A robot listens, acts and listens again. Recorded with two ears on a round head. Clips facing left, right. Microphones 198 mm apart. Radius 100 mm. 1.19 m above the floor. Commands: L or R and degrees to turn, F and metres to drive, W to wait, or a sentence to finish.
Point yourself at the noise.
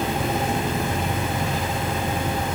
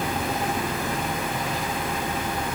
W
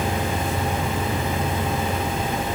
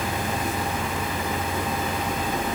W
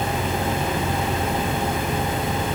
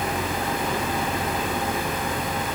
I can't make out anything to turn to.